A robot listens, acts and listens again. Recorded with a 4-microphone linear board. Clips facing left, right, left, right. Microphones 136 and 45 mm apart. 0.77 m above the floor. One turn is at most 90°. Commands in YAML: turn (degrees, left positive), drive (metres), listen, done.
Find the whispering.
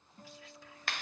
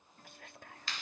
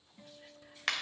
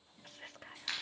turn: -50
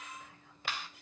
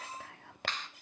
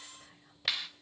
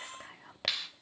turn: -75
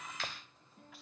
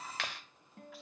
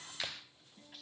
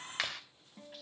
listen: true
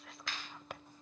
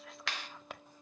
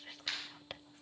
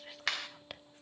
done: "Facing the whispering."